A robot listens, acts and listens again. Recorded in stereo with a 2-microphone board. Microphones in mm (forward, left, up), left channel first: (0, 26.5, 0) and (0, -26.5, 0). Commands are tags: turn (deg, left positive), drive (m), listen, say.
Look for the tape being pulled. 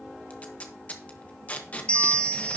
<turn deg="25"/>
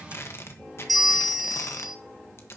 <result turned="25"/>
<turn deg="130"/>
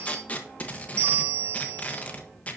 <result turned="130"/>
<turn deg="30"/>
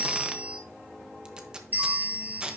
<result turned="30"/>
<turn deg="-15"/>
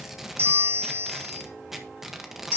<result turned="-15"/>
<say>Found it: tape being pulled, straight ahead.</say>